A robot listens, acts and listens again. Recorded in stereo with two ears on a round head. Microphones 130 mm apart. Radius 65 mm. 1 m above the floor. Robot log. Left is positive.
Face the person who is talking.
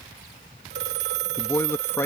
note: The man speaking: about 15° left or 165° left.
cmd yaw +15
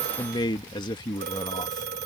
note: So it is at 150° left.
cmd yaw +150
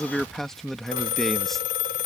end: Found it: a man speaking, straight ahead.